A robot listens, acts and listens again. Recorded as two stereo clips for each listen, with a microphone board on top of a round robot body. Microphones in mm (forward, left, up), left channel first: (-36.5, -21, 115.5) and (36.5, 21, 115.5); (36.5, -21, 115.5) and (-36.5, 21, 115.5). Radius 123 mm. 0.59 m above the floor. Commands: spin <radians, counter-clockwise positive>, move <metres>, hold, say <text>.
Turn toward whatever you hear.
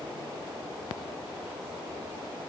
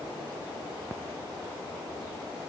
hold
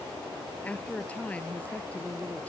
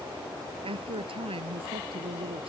spin 2.36
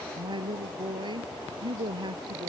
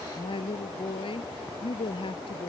say Found it: a woman speaking, straight ahead.